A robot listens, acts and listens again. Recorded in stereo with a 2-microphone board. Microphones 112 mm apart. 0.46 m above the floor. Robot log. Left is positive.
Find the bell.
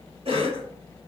cmd idle
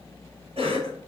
cmd idle
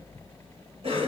end: I can't make out a bell, only a cough.